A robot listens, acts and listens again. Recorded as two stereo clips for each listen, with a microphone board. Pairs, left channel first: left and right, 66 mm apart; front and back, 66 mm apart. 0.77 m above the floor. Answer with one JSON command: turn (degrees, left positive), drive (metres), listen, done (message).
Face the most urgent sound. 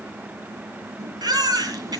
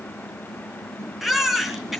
{"turn": -95}
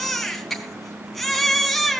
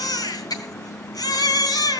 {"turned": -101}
{"done": "Found it: a baby crying, straight ahead, 2 to 4 m away."}